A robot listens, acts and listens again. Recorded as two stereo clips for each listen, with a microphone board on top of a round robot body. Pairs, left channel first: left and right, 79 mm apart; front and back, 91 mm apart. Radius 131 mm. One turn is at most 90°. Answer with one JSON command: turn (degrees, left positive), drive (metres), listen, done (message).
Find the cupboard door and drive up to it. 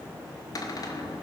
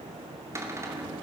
{"turn": 90}
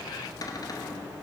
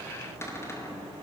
{"turn": 60}
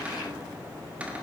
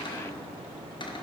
{"turn": -20}
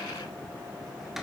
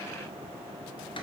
{"drive": 1.0}
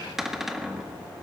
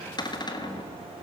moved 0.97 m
{"drive": 1.0}
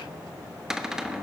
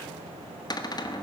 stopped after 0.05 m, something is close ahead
{"turn": -10}
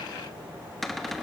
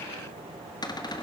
{"done": "Arrived at the cupboard door, straight ahead."}